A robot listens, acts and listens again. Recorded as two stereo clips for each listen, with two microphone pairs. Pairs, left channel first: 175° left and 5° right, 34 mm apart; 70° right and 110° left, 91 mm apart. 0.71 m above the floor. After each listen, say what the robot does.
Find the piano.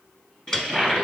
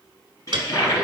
Turn 105° left.
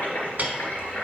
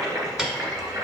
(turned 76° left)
Turn 30° left.
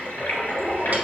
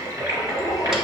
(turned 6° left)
Turn 25° left.
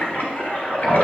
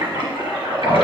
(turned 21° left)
Keep listening.
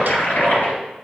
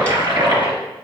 I heard a piano from this way, but can't make it out now.